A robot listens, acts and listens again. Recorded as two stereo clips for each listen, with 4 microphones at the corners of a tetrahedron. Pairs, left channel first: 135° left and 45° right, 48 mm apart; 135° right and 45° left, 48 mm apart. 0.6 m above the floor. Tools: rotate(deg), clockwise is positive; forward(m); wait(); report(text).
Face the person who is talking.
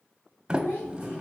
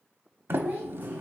rotate(-95)
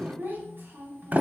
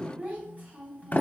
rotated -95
rotate(10)
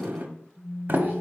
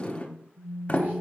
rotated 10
wait()
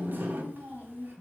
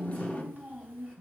report("Facing the child speaking, 2 to 4 m away.")